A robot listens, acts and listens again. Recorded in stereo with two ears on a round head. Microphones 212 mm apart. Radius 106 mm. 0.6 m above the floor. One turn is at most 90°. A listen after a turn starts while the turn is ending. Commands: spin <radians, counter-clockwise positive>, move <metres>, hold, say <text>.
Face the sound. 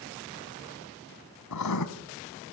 spin 1.57
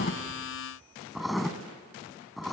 say Found it: writing, straight ahead.